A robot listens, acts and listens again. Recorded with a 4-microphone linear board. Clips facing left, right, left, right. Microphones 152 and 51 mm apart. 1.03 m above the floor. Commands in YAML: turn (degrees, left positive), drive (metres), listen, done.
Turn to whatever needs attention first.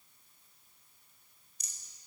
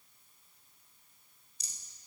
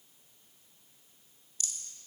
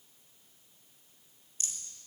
listen: true
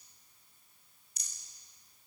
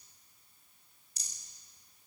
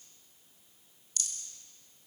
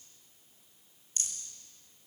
listen: true
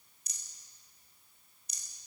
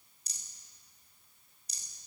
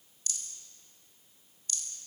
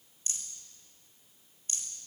done: "I can't make out anything urgent, only a rattle."